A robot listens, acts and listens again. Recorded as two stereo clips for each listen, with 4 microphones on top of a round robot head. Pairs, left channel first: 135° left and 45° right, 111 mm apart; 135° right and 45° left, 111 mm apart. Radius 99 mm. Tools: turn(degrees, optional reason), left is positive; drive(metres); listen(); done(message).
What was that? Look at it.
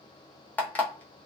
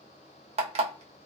turn(degrees=60, reason="The alarm clock: 60° left.")
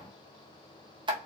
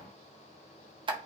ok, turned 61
done("Facing the alarm clock, under 1 m away.")